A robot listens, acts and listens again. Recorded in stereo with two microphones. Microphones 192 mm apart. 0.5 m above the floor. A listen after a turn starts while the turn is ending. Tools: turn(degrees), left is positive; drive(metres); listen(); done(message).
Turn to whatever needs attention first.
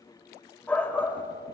turn(degrees=30)
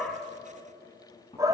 turn(degrees=-20)
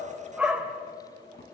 done("Facing the shout, 2 to 4 m away.")